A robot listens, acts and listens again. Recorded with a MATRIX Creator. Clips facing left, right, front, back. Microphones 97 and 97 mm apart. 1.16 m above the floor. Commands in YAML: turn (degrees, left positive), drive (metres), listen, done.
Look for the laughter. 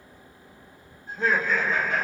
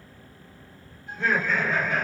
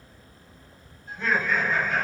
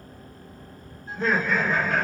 turn: 145
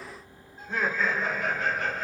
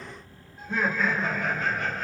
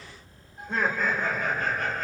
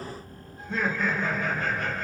done: "Found it: laughter, straight ahead."